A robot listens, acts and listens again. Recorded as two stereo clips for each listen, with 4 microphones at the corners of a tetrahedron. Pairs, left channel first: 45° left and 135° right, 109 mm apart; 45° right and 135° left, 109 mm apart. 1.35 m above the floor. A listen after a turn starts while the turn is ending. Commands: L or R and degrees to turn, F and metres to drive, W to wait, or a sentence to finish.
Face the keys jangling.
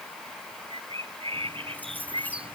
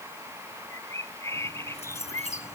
R30
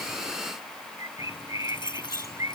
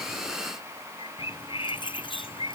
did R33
Facing the keys jangling.